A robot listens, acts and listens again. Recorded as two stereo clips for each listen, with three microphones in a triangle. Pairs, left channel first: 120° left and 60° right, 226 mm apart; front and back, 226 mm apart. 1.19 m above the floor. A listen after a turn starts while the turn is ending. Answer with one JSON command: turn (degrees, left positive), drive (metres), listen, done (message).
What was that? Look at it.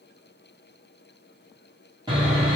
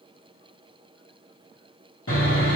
{"turn": 10}
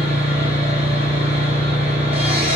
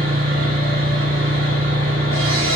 {"done": "Facing the sawing."}